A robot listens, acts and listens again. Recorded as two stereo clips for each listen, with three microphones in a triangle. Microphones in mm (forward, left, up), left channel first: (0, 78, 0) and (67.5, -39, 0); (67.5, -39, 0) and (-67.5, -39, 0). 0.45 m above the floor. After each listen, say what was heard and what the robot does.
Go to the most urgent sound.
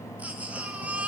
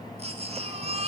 The baby crying: 140° right. Turn 140° right.
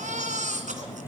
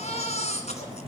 The baby crying is now 35° right. Turn 35° right.
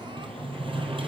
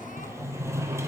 Keep listening.
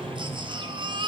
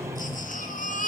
Drive 1.0 m forward.
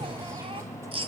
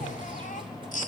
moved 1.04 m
The baby crying is now 15° right. Turn 15° right.
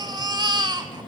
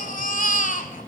Drive 1.0 m forward.
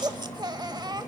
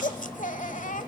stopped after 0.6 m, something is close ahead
I am next to the baby crying.